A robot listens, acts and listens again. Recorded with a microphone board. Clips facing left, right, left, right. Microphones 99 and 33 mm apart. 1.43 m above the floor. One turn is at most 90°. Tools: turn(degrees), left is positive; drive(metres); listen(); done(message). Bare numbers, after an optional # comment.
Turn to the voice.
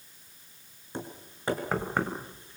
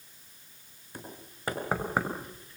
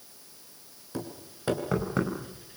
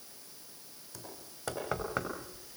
listen()
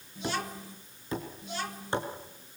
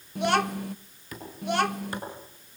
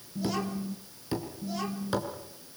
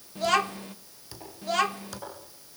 # The child speaking: about 70° right or 110° right.
turn(-70)
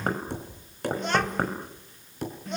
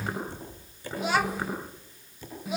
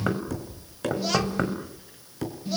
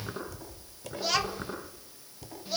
# So it is at 10° right.
turn(-10)
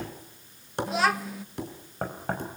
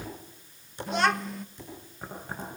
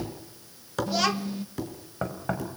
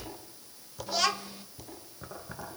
done("Facing the child speaking, under 1 m away.")